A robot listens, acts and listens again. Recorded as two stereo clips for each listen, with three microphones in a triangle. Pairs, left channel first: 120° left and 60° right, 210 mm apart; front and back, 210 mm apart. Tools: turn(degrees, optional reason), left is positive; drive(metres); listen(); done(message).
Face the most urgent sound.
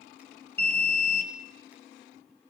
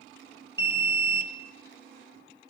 turn(degrees=155, reason="The alarm: 155° left.")
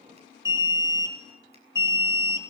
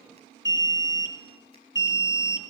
turn(degrees=15, reason="The alarm is now 15° left.")
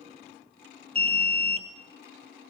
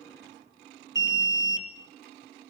done("Facing the alarm.")